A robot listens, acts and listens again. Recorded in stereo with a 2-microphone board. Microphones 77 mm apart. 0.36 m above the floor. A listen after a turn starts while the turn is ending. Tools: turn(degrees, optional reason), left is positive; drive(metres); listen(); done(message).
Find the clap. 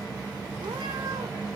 listen()
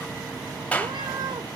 turn(degrees=20, reason="The clap: about 20° left or 160° left.")
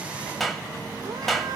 done("Facing the clap.")